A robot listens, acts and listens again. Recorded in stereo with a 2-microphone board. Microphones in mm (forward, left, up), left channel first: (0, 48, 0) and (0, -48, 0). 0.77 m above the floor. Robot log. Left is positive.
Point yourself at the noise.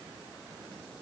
cmd idle
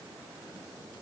cmd idle
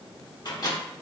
note: The microwave: about 40° left or 140° left.
cmd yaw +40
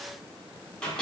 note: So it is at 10° left.
cmd yaw +10
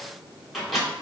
end: Facing the microwave.